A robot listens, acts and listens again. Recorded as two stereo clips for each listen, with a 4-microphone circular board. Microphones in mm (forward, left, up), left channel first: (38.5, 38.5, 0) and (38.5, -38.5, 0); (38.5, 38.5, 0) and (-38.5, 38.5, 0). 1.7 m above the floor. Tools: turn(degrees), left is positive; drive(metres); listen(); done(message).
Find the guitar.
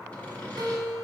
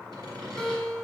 turn(degrees=-75)
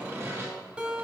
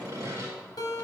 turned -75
turn(degrees=-15)
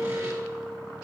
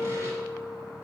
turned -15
done("Found it: a guitar, straight ahead, 1 to 2 m away.")